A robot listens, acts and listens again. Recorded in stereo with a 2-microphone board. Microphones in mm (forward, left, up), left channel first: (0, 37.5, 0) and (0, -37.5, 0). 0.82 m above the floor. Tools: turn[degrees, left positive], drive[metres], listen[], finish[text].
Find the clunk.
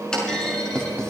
Action: turn[30]
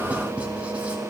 Action: listen[]
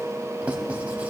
Action: finish[I heard a clunk, but can't make it out now. It was about 20° right or 140° left.]